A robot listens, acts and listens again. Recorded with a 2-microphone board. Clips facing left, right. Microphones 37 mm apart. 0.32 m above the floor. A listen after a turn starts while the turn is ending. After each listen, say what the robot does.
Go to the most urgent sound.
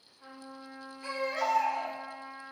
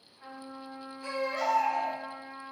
Turn 30° right.
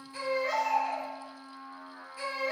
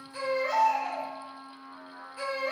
Turn 145° right.
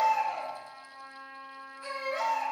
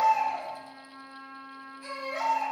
Turn 35° left.
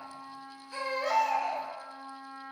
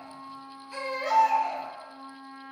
Drive 1.0 m forward.
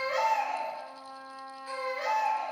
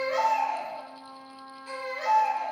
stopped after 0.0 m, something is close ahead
Something is in my way. I am facing the baby crying but have not reached it.